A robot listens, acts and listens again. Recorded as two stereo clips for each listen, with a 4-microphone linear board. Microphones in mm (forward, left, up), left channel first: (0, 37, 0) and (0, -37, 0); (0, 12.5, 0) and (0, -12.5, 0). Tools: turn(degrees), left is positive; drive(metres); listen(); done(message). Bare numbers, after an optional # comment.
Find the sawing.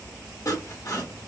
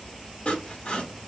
# The sawing: about 45° left or 135° left.
turn(45)
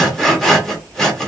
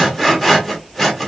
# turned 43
done("Facing the sawing, 1 to 2 m away.")